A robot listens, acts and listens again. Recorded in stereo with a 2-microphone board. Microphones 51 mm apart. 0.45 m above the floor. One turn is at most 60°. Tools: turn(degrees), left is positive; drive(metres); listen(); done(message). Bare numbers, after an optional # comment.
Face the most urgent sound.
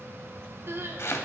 # The crying: about 55° right or 125° right.
turn(-55)
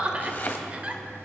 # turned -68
# So it is at 35° right.
turn(-35)
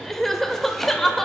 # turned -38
done("Facing the crying.")